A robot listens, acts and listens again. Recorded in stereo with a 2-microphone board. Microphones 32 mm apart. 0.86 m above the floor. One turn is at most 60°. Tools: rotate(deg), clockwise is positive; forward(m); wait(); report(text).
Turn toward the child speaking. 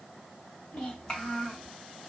rotate(-35)
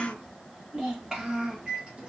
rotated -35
rotate(15)
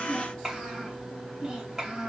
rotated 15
rotate(20)
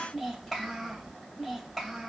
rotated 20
report("Facing the child speaking.")